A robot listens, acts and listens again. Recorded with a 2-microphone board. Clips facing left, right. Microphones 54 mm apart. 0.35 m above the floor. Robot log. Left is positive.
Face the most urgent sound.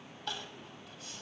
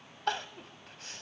note: The crying: about 65° right or 115° right.
cmd yaw -65
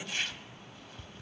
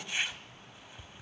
cmd idle
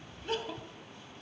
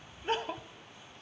note: So it is at 45° right.
cmd yaw -45
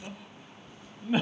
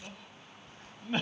end: Facing the crying, under 1 m away.